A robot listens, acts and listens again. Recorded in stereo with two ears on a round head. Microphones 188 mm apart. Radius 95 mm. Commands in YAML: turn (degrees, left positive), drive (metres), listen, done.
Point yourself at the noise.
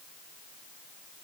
listen: true
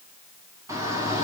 turn: -30
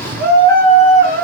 turn: -135
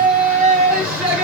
turn: -10
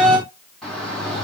done: "Facing the shout, over 4 m away."